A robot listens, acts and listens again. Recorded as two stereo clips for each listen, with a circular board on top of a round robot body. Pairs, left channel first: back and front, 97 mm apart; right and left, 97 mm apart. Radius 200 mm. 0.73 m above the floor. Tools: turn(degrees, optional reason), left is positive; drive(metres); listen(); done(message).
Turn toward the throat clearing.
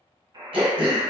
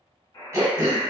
turn(degrees=30, reason="The throat clearing: 30° left.")
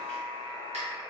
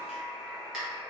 done("Facing the throat clearing.")